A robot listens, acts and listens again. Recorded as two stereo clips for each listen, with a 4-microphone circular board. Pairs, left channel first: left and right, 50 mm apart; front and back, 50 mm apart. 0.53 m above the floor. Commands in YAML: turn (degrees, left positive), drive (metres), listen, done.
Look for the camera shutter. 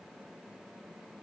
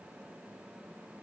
listen: true
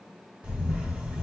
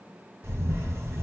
turn: -155
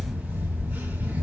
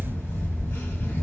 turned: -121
turn: -35
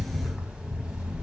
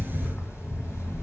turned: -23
turn: -10
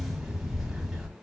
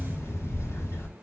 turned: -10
done: "Facing the camera shutter, 1 to 2 m away."